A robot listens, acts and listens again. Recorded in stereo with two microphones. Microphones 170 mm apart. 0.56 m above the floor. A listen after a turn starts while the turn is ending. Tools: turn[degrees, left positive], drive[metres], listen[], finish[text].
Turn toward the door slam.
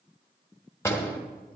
Action: turn[30]
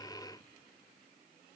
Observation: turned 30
Action: listen[]
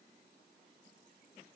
Action: finish[I heard a door slam, but can't make it out now. It was about 15° right or 135° left.]